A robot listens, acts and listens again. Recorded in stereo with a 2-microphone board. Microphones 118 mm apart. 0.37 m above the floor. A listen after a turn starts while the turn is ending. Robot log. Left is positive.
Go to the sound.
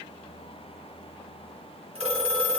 note: The phone ringing: about 55° right or 125° right.
cmd yaw -55
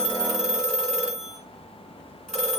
cmd fwd 1.0
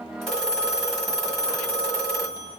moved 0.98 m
cmd fwd 1.0
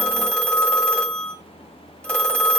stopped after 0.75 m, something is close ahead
note: The phone ringing is now 10° left.
cmd yaw +10
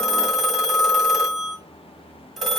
end: Arrived at the phone ringing, straight ahead.